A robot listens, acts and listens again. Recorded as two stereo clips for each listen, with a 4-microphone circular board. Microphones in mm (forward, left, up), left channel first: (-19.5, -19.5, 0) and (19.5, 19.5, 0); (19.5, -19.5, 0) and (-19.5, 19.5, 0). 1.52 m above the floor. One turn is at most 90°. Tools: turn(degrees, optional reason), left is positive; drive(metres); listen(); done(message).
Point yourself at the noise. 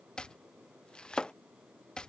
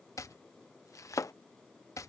turn(degrees=-60, reason="The chopping: 60° right.")
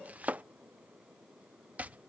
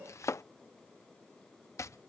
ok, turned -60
turn(degrees=-15, reason="The chopping is now 15° right.")
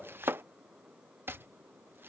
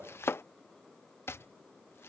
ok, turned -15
done("Facing the chopping.")